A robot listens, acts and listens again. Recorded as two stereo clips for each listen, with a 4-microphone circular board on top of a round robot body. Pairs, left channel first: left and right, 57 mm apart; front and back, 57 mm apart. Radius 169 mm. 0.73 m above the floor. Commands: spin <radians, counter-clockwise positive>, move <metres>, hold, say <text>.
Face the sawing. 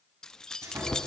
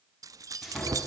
spin -1.57
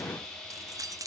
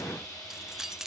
say Facing the sawing.